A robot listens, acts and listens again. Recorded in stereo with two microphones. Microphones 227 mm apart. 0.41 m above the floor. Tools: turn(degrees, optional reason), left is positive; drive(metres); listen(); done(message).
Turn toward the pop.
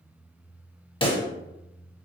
turn(degrees=25, reason="The pop: about 25° left or 155° left.")
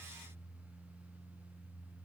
listen()
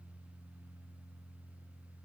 done("I heard a pop, but can't make it out now. It was about straight ahead or 130° left.")